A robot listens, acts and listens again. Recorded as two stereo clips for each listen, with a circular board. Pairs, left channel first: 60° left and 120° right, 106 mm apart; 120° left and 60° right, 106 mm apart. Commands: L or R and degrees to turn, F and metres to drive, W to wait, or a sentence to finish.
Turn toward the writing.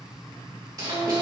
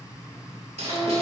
R70
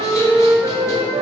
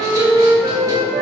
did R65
W
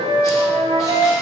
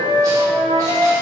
W
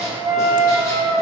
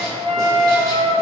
I heard writing from this way, but can't make it out now.